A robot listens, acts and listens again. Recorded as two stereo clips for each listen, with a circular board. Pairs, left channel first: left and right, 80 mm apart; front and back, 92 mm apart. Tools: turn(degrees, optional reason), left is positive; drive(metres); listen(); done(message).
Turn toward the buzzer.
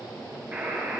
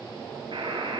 turn(degrees=-155, reason="The buzzer: 155° right.")
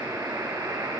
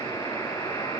turn(degrees=-40, reason="The buzzer is now 40° right.")
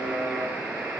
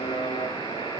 done("Found it: a buzzer, straight ahead.")